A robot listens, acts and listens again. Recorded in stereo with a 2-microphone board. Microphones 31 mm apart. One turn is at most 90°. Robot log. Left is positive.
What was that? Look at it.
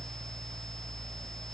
cmd idle
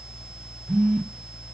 note: The phone buzzing: about 30° right or 150° right.
cmd yaw -30
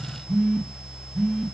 end: Found it: a phone buzzing, straight ahead.